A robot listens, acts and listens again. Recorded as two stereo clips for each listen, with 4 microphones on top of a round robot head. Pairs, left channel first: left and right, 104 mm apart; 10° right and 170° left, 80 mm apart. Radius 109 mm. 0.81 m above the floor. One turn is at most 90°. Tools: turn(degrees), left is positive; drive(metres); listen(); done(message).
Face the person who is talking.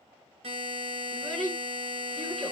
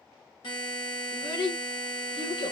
done("Facing the child speaking, 2 to 4 m away.")